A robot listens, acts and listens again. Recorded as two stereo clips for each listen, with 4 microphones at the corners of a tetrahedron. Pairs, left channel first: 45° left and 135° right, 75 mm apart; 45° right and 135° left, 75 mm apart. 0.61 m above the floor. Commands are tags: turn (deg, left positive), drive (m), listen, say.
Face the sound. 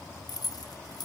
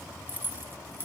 <turn deg="75"/>
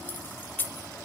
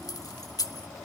<turn deg="-20"/>
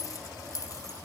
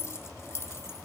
<say>Found it: keys jangling, straight ahead, under 1 m away.</say>